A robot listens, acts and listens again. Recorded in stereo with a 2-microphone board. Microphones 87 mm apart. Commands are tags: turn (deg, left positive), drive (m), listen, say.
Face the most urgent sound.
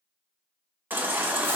<turn deg="-20"/>
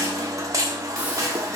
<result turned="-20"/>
<turn deg="-140"/>
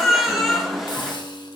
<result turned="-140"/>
<say>Found it: a baby crying, straight ahead.</say>